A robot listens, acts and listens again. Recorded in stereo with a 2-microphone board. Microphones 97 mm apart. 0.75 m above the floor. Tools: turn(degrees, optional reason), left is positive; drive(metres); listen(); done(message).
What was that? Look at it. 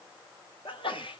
turn(degrees=60, reason="The sneeze: about 60° left or 120° left.")
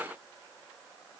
listen()
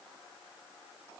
done("I heard a sneeze, but can't make it out now. It was about straight ahead or 60° left.")